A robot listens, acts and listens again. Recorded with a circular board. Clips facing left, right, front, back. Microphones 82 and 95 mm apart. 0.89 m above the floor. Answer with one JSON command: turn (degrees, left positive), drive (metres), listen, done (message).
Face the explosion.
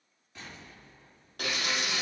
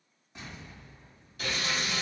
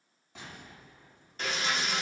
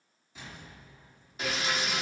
{"turn": -20}
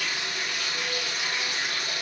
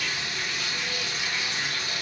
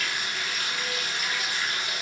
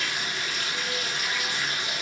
{"done": "Facing where the explosion came from. I can't hear it now."}